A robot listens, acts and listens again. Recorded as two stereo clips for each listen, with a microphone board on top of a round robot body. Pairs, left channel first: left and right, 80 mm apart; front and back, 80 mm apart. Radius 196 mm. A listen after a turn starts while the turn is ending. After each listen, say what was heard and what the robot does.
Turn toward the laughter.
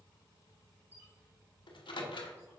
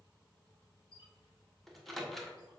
Keep listening.
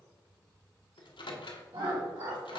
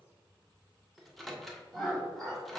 The laughter: 85° right. Turn 85° right.
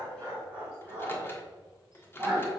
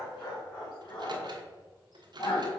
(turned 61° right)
The laughter is now 20° right. Turn 20° right.
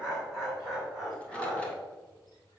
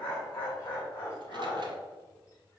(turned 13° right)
Facing the laughter.